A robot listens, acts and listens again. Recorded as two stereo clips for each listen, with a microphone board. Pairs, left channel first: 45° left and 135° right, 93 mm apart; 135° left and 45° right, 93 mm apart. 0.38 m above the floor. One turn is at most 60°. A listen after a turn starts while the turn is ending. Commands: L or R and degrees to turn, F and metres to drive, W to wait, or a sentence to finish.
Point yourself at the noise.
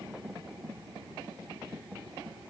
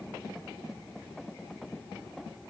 W
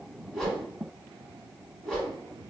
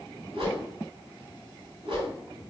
R40
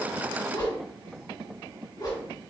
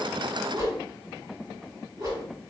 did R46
Facing the whoosh.